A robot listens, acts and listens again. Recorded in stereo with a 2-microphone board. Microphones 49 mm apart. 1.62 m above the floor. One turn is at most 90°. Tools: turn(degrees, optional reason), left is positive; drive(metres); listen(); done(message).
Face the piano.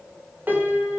turn(degrees=-35, reason="The piano: about 35° right or 145° right.")
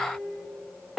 done("Facing the piano.")